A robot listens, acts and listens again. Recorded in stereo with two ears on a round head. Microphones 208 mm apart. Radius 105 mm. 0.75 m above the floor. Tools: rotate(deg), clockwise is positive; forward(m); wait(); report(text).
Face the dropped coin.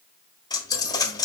rotate(-20)
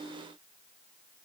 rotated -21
wait()
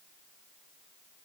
report("I heard a dropped coin, but can't make it out now. It was about 5° right or 140° left.")